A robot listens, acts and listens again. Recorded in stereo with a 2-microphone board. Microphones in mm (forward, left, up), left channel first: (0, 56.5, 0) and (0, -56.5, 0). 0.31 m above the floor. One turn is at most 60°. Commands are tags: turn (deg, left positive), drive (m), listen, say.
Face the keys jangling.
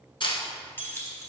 <turn deg="25"/>
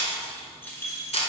<turn deg="25"/>
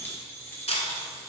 <turn deg="30"/>
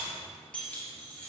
<turn deg="15"/>
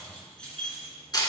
<turn deg="10"/>
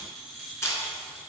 <say>Facing the keys jangling.</say>